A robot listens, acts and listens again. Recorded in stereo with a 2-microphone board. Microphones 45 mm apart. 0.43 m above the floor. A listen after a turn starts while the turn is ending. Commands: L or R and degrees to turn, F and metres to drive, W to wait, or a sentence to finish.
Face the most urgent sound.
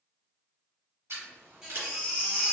R30
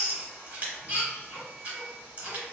R135
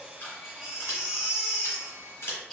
Facing the baby crying.